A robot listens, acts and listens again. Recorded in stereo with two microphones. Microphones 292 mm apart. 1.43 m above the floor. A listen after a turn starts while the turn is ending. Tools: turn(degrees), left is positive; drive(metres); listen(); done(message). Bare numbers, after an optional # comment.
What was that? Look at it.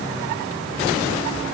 listen()
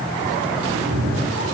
# The cat meowing: about 45° right or 135° right.
turn(-45)
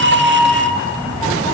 # So it is at 15° left.
turn(15)
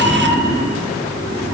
# The cat meowing is now 25° left.
turn(25)
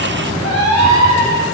# The cat meowing is now 25° left.
turn(25)
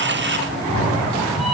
done("Found it: a cat meowing, straight ahead.")